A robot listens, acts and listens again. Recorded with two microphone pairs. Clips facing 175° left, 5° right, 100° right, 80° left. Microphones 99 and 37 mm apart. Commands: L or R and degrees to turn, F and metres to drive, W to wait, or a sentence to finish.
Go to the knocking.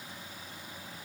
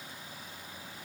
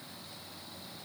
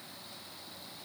W
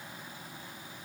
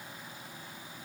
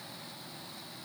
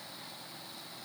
W
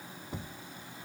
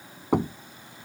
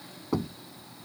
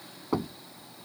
F1.0
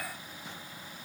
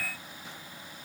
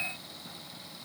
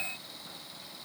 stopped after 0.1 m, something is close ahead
W
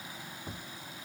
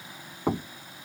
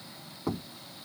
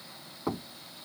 Something is in my way. I am facing the knocking but have not reached it.